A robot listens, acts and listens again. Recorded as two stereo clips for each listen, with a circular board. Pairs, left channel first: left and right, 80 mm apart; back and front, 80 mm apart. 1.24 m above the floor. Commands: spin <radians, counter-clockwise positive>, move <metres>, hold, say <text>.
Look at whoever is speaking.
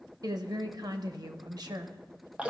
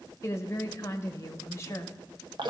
spin -2.18
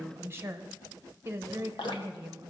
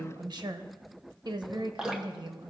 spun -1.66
spin -0.52
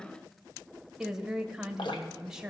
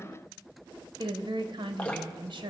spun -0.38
say Facing the woman speaking.